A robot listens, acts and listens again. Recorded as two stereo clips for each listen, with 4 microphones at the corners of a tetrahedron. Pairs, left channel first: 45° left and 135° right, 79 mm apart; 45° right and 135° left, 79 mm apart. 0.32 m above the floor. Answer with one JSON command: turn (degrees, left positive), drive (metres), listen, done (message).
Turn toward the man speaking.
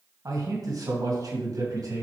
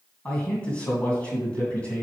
{"turn": -115}
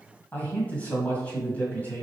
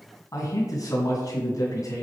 {"turn": -20}
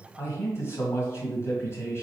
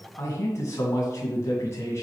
{"done": "Facing the man speaking, 2 to 4 m away."}